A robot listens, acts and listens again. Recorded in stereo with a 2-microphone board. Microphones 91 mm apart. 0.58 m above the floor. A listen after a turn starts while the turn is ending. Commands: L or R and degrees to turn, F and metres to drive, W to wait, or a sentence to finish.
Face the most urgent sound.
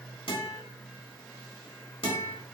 W
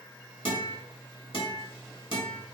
W
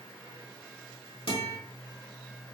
I can't make out anything urgent to turn to.